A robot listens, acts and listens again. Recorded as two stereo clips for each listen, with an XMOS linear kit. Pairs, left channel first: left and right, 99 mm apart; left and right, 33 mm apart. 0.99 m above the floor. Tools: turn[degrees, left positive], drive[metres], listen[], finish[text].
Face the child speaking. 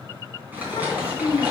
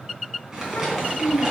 Thought: The child speaking: about 65° left or 115° left.
Action: turn[65]
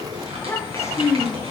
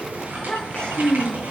Thought: So it is at 40° left.
Action: turn[40]
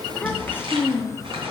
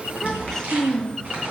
Thought: The child speaking is now 30° left.
Action: turn[30]
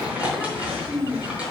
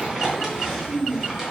Thought: The child speaking is now 10° left.
Action: turn[10]
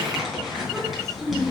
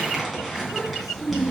Action: finish[Found it: a child speaking, straight ahead, 1 to 2 m away.]